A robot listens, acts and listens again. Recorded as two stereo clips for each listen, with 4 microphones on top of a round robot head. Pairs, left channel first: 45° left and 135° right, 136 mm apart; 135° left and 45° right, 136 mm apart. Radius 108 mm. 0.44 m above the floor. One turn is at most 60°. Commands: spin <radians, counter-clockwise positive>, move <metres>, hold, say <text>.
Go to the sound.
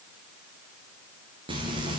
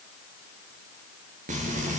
spin -1.05
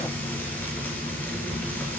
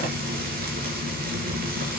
spin -0.61
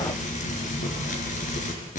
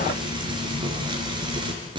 spin 0.26
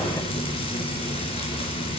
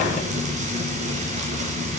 move 1.0
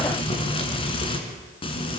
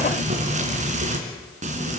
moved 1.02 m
move 1.0
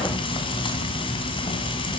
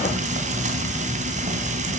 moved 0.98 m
spin -0.17
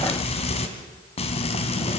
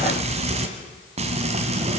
move 1.0
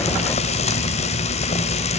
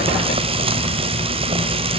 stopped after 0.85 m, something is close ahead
say I am next to the frying.